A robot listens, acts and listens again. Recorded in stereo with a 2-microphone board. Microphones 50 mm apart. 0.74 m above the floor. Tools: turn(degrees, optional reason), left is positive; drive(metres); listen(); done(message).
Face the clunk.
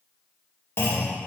turn(degrees=55, reason="The clunk: about 55° left or 125° left.")
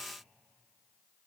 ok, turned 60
listen()
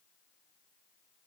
done("I heard a clunk, but can't make it out now. It was about 5° right or 65° left.")